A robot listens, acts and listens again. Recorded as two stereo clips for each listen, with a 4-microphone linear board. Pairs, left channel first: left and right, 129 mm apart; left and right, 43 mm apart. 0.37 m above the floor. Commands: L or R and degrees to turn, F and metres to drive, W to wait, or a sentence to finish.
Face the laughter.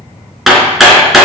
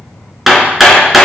W
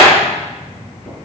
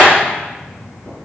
W
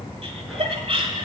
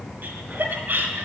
R50
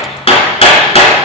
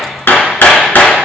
W
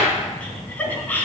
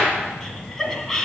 L15
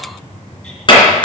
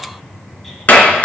W
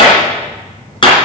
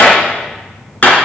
W
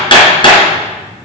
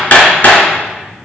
I heard laughter from this way, but can't make it out now.